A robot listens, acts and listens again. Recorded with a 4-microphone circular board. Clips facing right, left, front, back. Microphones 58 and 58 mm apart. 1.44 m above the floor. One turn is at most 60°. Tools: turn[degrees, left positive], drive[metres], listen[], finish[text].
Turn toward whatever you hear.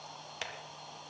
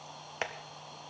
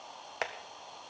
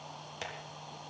Thought: The tapping: 35° left.
Action: turn[35]
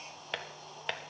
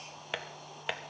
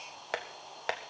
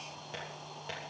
Action: finish[Facing the tapping, 1 to 2 m away.]